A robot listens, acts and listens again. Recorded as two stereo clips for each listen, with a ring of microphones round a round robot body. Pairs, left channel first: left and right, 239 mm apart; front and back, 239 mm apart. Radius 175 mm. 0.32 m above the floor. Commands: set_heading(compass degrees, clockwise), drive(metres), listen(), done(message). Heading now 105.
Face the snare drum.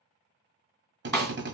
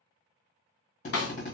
set_heading(95)
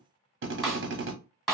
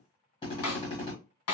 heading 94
done("Facing the snare drum.")